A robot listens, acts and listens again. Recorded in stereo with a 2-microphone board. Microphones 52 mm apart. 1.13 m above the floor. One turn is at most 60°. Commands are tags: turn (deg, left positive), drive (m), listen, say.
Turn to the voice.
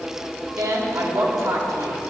<turn deg="-60"/>
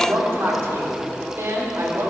<turn deg="-55"/>
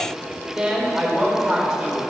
<say>Facing the woman speaking, 2 to 4 m away.</say>